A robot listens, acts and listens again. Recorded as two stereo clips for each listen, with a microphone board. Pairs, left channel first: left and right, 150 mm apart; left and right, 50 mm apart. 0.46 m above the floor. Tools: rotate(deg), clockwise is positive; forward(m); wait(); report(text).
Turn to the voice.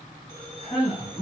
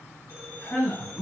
rotate(-45)
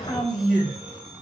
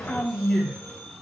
report("Found it: a man speaking, straight ahead, 1 to 2 m away.")